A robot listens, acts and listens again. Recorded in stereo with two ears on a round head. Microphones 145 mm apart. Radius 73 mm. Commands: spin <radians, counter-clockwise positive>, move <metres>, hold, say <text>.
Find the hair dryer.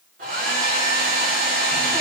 spin -0.96
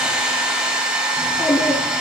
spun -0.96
spin -0.17
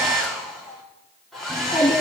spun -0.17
say Facing the hair dryer.